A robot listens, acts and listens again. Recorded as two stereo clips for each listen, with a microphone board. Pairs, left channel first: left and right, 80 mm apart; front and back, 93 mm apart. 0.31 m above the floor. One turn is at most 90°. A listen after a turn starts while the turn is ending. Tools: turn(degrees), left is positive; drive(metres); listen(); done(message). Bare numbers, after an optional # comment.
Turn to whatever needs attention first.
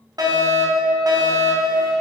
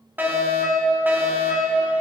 # The fire alarm: 110° right.
turn(-90)
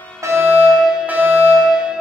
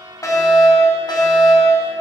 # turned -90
# The fire alarm is now 25° right.
turn(-25)
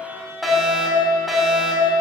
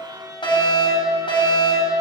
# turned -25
done("Facing the fire alarm, 2 to 4 m away.")